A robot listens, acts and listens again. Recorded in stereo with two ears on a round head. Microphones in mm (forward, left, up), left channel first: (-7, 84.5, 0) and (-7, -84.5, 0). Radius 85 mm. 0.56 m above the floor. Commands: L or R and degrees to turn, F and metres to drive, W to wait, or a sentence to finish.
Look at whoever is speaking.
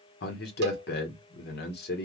L55
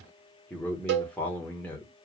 L10
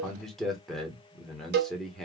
Facing the man speaking.